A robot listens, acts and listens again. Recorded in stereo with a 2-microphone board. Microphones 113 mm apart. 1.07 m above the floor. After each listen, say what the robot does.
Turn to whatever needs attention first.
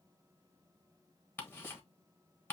Keep listening.
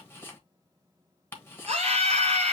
Turn 60° right.
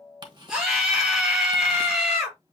Found it: a scream, straight ahead, 2 to 4 m away.